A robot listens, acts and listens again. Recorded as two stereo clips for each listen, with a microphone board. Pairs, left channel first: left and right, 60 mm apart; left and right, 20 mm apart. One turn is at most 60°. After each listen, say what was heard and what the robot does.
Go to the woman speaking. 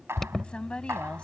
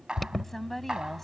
The woman speaking: about 15° left or 165° left. Turn 15° left.
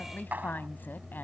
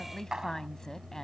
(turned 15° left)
So it is at 145° left. Turn 60° left.
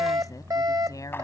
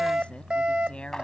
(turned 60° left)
The woman speaking is now 75° left. Turn 60° left.
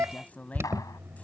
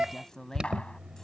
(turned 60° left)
The woman speaking is now 25° left. Turn 25° left.
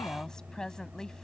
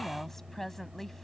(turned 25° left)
The woman speaking is now 10° left. Turn 10° left.
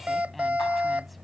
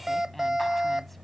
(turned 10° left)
Keep listening.
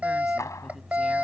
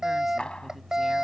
Keep listening.
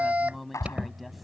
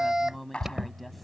Drive 1.0 m forward.
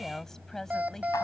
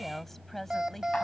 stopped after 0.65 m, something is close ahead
Something is in my way. I am facing the woman speaking but have not reached it.